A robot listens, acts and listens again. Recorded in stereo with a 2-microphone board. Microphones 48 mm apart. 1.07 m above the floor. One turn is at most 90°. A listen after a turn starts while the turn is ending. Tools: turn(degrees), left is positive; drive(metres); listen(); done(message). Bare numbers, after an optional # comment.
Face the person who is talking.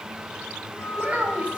# The child speaking: about 30° right or 150° right.
turn(-30)
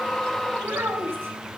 # So it is at 120° right.
turn(-90)
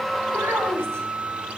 # The child speaking is now 60° right.
turn(-60)
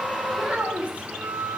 # The child speaking is now 30° right.
turn(-30)
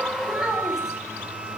# The child speaking is now 10° right.
turn(-10)
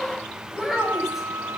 done("Found it: a child speaking, straight ahead, over 4 m away.")